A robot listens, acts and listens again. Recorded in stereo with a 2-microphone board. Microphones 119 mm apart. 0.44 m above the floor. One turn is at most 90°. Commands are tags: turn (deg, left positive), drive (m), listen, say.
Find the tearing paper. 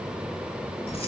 <listen/>
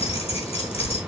<listen/>
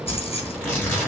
<turn deg="15"/>
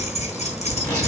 <turn deg="90"/>
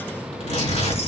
<turn deg="90"/>
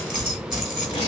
<turn deg="40"/>
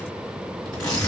<say>Found it: tearing paper, straight ahead, over 4 m away.</say>